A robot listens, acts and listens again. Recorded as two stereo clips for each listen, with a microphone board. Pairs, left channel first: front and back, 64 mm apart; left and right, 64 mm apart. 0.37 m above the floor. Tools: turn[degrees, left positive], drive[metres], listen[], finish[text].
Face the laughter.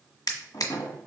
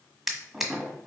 Action: listen[]
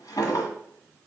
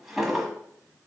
Action: listen[]
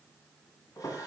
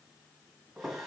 Action: finish[I can't make out laughter to turn to.]